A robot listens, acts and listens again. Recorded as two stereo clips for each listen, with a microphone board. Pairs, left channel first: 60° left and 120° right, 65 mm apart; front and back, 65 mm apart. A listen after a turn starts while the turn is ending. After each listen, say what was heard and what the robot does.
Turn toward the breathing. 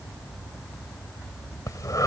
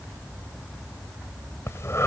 The breathing: 40° left. Turn 40° left.
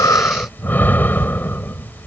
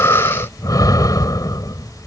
Facing the breathing.